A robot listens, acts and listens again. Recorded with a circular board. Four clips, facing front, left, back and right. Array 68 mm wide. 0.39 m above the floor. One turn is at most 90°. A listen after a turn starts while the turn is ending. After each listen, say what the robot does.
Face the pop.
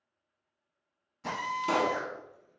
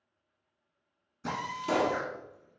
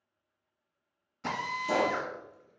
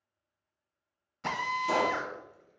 Turn 10° left.
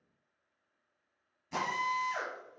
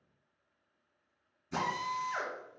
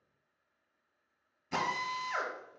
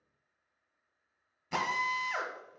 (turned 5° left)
I heard a pop from this way, but can't make it out now.